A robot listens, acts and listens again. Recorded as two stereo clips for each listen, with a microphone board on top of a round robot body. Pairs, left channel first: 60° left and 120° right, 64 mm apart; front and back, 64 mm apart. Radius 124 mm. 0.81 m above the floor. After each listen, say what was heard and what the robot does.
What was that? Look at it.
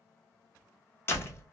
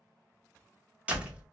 The door slam: 115° left. Turn 115° left.
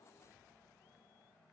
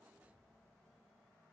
Facing where the door slam came from. I can't hear it now.